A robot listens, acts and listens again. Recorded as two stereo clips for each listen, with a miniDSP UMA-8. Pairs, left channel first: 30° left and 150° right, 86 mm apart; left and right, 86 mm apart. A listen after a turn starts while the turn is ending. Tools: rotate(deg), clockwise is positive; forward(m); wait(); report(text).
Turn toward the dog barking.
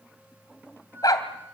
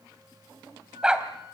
rotate(10)
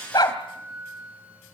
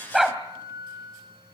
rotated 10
report("Found it: a dog barking, straight ahead, 2 to 4 m away.")